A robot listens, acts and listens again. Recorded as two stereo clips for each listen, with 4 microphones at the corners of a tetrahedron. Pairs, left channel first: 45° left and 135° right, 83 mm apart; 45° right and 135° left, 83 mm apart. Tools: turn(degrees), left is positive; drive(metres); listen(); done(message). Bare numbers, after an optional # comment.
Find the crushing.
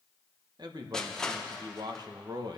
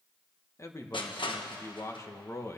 # The crushing: 35° right.
turn(-35)
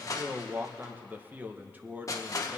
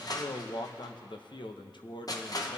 done("Facing the crushing, 1 to 2 m away.")